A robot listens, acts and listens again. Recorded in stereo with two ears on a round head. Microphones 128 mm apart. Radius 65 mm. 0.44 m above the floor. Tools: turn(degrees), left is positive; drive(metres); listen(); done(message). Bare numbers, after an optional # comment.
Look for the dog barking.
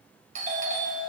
listen()
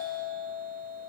listen()
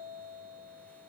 done("I can't make out a dog barking to turn to.")